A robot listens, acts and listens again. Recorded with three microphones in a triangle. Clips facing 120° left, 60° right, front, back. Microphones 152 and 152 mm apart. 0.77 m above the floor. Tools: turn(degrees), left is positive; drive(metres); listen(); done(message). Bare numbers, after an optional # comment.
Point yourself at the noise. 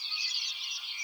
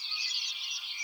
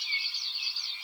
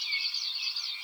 listen()
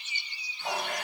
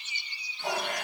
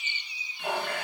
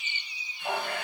# The running tap: 20° right.
turn(-20)
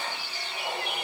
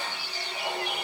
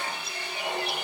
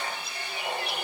done("Facing the running tap.")